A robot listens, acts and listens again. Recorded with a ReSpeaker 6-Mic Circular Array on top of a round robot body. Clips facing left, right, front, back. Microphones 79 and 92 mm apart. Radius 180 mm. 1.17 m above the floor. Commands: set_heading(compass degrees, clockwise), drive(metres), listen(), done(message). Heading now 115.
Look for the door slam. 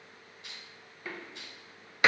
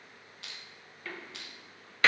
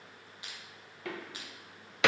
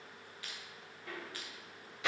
set_heading(100)
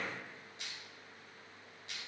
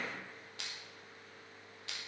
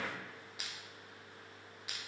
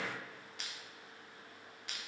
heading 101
done("Facing where the door slam came from. I can't hear it now.")